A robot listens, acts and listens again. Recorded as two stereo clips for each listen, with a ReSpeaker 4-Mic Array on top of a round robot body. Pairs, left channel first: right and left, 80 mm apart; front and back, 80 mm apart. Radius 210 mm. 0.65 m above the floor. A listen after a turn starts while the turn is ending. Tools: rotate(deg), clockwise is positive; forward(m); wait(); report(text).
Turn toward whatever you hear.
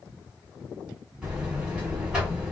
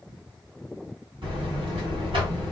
rotate(-165)
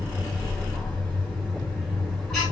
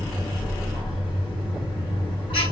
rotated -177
rotate(10)
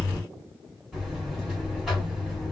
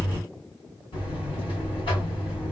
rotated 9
report("Facing the buzzer.")